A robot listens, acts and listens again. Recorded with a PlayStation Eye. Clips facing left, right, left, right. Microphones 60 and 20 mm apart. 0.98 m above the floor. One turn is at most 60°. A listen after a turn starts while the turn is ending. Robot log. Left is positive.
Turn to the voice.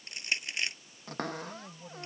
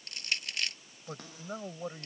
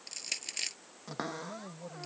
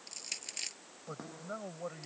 note: The man speaking: about 55° right or 125° right.
cmd yaw -55
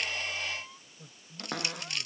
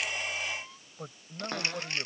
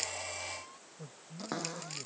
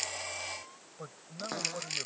note: So it is at 70° right.
cmd yaw -60
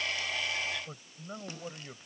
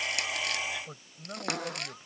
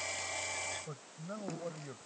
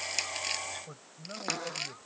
end: Found it: a man speaking, straight ahead.